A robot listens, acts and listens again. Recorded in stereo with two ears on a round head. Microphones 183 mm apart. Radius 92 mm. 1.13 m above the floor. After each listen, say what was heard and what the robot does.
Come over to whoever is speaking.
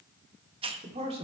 The man speaking: about 30° right or 150° right. Turn 30° right.
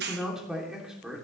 Drive 1.0 m forward.
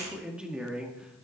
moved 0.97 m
Drive 1.0 m forward.
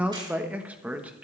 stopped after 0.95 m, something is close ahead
Arrived at the man speaking, straight ahead.